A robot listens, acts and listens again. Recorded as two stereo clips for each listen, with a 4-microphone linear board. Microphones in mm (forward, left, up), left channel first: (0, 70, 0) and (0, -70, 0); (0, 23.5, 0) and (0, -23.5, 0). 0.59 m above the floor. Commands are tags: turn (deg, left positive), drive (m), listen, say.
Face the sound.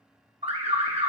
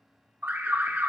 <turn deg="-45"/>
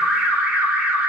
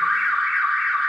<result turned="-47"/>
<turn deg="-10"/>
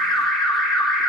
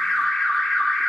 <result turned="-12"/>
<say>Facing the alarm.</say>